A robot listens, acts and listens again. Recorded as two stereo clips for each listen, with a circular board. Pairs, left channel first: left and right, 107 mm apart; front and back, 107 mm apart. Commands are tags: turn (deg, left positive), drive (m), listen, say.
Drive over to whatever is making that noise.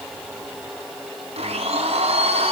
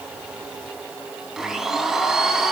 <turn deg="-95"/>
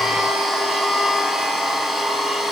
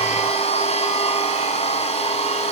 <drive m="1.0"/>
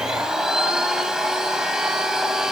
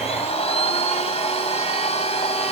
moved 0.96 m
<drive m="1.0"/>
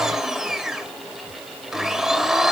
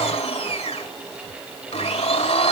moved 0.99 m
<drive m="1.0"/>
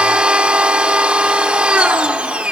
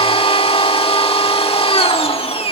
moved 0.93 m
<turn deg="-10"/>
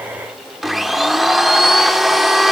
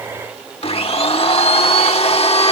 <drive m="1.0"/>
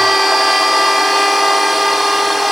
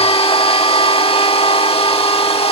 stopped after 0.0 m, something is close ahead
<say>Arrived at the blender, straight ahead.</say>